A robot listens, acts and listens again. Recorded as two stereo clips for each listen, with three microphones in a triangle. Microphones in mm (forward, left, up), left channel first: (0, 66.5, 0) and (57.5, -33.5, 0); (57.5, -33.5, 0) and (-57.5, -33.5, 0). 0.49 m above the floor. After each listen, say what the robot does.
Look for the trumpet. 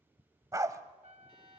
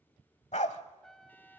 Turn 85° right.
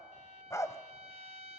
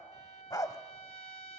Turn 30° right.
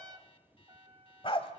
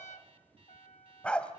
Turn 10° right.
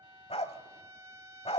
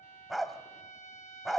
Found it: a trumpet, straight ahead.